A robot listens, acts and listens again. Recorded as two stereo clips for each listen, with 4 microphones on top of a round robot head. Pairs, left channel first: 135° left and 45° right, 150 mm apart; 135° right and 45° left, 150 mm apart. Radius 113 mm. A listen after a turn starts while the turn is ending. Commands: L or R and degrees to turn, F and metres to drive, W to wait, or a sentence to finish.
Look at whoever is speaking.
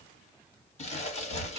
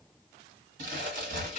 W
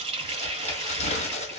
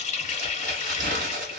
W
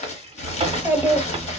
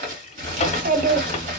L30
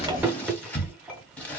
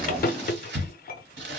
W
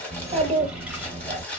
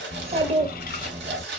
Facing the child speaking, 1 to 2 m away.